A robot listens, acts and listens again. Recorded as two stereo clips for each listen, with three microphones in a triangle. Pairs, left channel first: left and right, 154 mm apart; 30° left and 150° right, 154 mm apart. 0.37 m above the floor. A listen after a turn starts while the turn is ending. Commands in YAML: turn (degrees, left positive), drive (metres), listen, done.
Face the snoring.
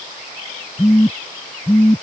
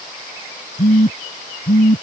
listen: true
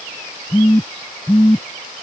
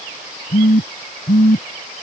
listen: true
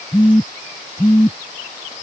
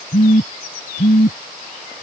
done: "I can't make out snoring, only a phone buzzing."